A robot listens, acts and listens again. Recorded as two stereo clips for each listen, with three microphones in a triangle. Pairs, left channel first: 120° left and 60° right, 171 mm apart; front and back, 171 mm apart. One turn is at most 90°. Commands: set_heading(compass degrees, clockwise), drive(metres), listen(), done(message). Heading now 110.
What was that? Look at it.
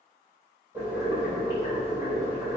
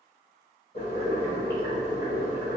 set_heading(95)
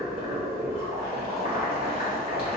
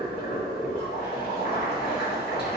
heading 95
done("Facing the boiling.")